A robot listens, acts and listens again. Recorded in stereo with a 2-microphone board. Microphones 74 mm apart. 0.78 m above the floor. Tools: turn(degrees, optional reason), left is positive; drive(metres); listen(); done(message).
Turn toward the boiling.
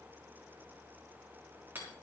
listen()
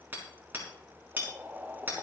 turn(degrees=-25, reason="The boiling: about 25° right or 155° right.")
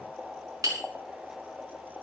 done("Facing the boiling.")